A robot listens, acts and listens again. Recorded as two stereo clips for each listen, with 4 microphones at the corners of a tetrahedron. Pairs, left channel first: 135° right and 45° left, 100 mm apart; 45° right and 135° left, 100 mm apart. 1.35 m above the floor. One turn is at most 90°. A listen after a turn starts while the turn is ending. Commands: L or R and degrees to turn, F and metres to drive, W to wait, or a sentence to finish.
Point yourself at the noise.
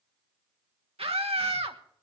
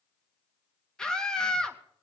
L35
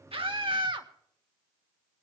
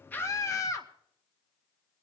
L10
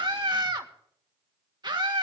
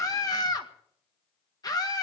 Found it: a scream, straight ahead, 1 to 2 m away.